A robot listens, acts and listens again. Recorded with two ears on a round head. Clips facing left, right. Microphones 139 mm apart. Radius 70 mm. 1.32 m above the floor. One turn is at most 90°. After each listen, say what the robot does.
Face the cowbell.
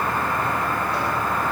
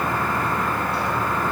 Keep listening.
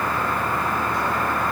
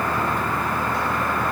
Keep listening.
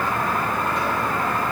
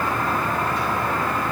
I can't make out a cowbell.